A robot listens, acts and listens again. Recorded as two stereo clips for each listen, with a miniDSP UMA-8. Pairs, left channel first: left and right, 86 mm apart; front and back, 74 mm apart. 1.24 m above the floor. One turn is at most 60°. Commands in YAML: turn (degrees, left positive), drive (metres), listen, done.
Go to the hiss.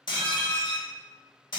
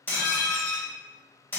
listen: true
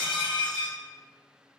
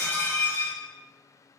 listen: true
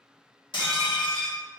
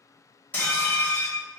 done: "I can't make out a hiss, only dishes clattering."